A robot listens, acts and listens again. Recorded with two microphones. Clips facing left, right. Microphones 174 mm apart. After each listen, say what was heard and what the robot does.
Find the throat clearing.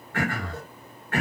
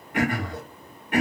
The throat clearing: about 15° right or 165° right. Turn 15° right.
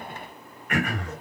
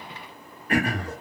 So it is at 150° right. Turn 150° right.
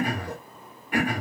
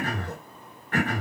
The throat clearing is now 15° left. Turn 15° left.
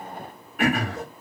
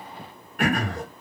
Facing the throat clearing.